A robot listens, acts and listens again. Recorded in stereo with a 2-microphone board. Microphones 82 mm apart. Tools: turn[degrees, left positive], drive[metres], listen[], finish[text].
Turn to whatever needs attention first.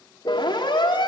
Action: turn[90]
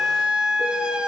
Thought: So it is at 10° right.
Action: turn[-10]
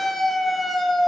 Action: finish[Facing the siren.]